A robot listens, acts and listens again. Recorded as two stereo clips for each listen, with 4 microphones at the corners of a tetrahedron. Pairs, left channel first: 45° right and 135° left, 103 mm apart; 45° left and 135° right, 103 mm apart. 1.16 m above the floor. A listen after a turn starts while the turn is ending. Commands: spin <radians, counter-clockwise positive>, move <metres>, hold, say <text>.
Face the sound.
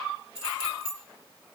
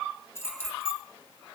spin 2.01
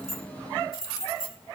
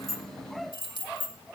spin 0.17
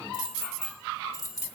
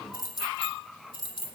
spin 0.17
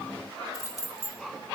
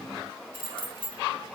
spin 0.17
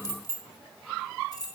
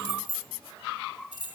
say Facing the keys jangling.